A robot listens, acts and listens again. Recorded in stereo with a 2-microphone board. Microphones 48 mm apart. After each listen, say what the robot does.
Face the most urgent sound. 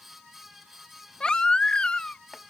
Turn 20° left.
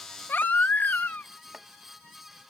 Turn 140° left.
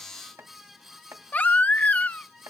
Turn 40° left.
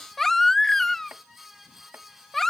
Turn 10° left.
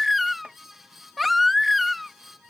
Found it: a baby crying, straight ahead.